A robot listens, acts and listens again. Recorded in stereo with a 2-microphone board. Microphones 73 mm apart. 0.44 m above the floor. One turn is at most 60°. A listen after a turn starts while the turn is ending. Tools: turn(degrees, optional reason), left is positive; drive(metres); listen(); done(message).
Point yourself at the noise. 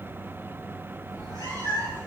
turn(degrees=60, reason="The cat meowing: about 65° left or 115° left.")
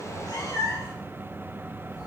turn(degrees=45, reason="So it is at 45° left.")
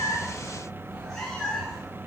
done("Found it: a cat meowing, straight ahead.")